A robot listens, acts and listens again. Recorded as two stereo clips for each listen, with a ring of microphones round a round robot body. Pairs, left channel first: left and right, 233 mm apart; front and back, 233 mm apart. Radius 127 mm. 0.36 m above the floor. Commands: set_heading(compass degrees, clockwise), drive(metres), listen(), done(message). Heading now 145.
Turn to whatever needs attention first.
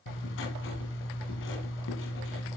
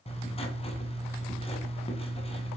listen()
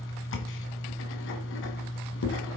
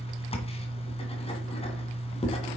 listen()
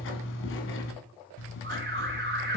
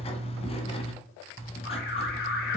set_heading(195)
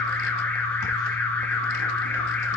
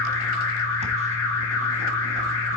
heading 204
set_heading(194)
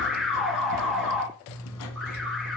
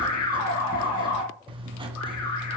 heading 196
done("Facing the alarm.")